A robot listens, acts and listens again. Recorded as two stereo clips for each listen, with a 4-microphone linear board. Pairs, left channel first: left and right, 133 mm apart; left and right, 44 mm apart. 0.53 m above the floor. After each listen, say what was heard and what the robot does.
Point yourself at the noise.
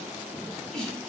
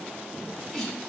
Turn 30° left.
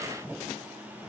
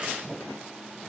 Keep listening.
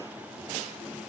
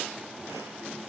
I heard a sneeze, but can't make it out now. It was about 25° right or 145° left.